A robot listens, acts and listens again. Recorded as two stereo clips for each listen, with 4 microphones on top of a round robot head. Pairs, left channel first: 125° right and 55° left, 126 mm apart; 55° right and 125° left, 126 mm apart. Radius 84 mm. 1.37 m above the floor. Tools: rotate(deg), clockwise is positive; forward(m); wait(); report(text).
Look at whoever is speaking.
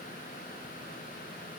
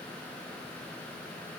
wait()
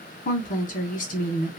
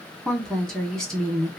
rotate(140)
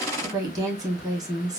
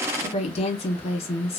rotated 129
rotate(10)
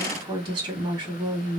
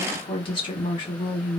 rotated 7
report("Facing the woman speaking, 1 to 2 m away.")